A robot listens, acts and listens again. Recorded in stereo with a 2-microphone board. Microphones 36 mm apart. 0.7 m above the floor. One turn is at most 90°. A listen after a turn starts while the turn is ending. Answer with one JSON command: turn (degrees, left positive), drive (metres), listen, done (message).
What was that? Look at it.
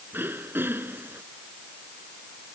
{"turn": -75}
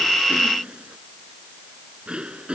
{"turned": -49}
{"turn": -25}
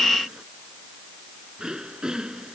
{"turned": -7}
{"turn": -20}
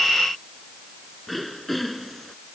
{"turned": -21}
{"done": "Found it: throat clearing, straight ahead."}